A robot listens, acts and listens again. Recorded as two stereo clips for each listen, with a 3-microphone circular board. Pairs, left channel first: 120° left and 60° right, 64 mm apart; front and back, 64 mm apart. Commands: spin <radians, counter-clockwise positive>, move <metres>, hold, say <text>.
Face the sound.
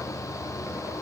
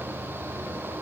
hold
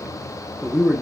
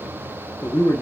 spin 0.44
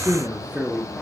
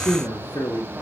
say Facing the man speaking.